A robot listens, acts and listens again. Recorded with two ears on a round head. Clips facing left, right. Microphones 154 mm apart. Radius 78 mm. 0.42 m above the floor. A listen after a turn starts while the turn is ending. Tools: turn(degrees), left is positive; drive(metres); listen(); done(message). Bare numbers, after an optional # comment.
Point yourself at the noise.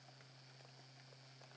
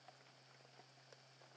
listen()
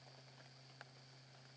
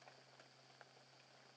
listen()
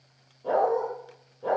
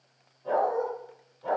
# The dog barking: about 70° left or 110° left.
turn(70)
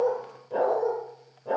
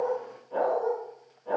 # So it is at 40° left.
turn(40)
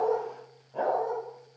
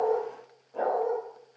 # The dog barking is now 10° left.
turn(10)
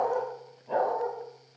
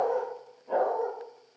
done("Facing the dog barking, over 4 m away.")